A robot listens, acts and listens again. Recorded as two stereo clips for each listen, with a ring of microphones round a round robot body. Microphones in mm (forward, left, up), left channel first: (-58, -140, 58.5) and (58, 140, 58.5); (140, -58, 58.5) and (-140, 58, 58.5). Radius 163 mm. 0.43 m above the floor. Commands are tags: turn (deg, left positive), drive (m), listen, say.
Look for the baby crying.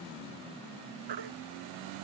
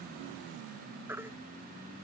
<turn deg="75"/>
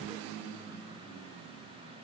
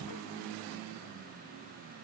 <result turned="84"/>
<turn deg="-10"/>
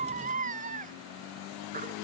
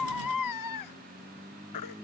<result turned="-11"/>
<say>Facing the baby crying.</say>